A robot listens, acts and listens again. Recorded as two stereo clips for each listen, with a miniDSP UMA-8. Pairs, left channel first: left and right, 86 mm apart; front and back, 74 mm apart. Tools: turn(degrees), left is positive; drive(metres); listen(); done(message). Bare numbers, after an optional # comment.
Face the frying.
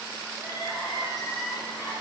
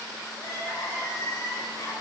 listen()
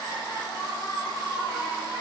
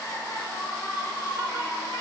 listen()
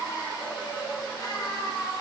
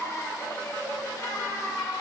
done("I can't make out frying to turn to.")